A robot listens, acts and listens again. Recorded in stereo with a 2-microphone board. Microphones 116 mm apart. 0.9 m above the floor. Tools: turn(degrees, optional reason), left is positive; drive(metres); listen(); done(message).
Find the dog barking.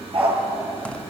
turn(degrees=-55, reason="The dog barking: about 55° right or 125° right.")
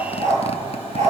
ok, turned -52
turn(degrees=-80, reason="So it is at 80° right.")
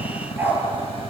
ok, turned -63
turn(degrees=-20, reason="The dog barking is now 20° right.")
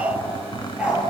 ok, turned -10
turn(degrees=-10, reason="The dog barking is now 10° right.")
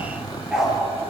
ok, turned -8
done("Facing the dog barking, over 4 m away.")